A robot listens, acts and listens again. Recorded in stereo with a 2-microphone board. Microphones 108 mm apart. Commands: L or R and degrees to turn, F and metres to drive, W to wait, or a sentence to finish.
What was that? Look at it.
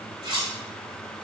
R45
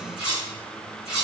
Found it: cutlery clinking, straight ahead.